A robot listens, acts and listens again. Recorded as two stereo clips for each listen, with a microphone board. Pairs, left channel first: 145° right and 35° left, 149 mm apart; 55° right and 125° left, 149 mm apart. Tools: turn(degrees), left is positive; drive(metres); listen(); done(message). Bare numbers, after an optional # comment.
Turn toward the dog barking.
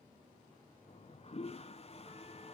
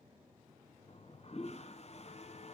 listen()
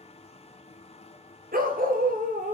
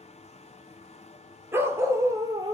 # The dog barking: 60° left.
turn(60)
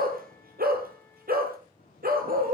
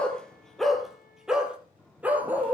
# The dog barking is now 45° left.
turn(45)
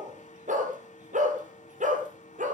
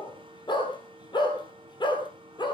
done("Facing the dog barking, 2 to 4 m away.")